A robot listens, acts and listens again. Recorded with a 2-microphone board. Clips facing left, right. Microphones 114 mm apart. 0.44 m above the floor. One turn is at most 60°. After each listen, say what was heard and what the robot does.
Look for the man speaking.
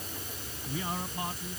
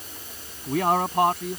The man speaking: about 70° right or 110° right. Turn 60° right.
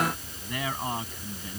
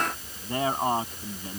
So it is at 40° right. Turn 40° right.
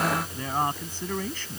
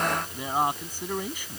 The man speaking is now 10° right. Turn 10° right.
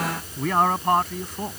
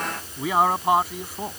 Facing the man speaking.